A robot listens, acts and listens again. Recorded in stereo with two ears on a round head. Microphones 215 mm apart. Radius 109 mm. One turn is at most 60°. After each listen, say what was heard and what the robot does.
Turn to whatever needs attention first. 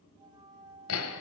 Keep listening.
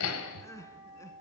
Turn 30° left.
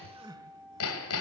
So it is at 15° right. Turn 15° right.
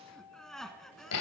Facing the crying.